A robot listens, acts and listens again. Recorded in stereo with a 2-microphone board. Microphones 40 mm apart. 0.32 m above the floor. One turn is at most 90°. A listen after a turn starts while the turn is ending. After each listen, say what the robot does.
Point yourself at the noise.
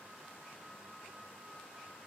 Keep listening.
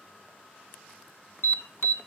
Turn 60° left.
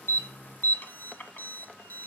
Turn 50° left.
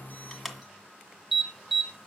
Facing the alarm, 1 to 2 m away.